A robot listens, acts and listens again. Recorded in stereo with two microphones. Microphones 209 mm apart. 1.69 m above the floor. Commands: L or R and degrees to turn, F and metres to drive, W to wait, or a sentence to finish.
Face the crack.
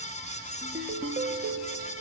W
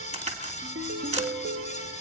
R35
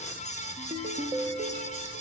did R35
W
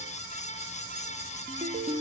I heard a crack, but can't make it out now. It was about straight ahead or 110° right.